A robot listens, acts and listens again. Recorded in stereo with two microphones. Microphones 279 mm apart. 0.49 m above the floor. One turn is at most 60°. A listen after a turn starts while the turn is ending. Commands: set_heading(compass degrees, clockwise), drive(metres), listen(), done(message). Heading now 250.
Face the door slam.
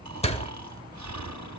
set_heading(230)
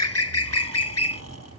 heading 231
listen()
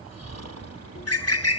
done("I heard a door slam, but can't make it out now. It was about 5° left or 140° left.")